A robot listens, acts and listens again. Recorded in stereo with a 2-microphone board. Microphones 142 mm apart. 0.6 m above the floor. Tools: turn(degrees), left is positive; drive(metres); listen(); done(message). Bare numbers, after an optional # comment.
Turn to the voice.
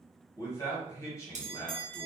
# The man speaking: about 25° left or 155° left.
turn(25)
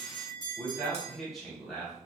done("Found it: a man speaking, straight ahead.")